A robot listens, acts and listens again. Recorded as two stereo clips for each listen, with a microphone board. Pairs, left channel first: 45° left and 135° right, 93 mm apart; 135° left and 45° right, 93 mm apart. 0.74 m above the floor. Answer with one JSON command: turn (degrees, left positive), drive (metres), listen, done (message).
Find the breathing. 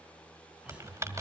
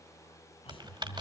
{"turn": 150}
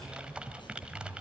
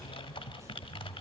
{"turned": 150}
{"turn": 15}
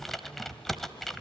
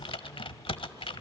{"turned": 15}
{"listen": true}
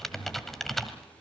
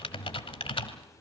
{"done": "Facing the breathing."}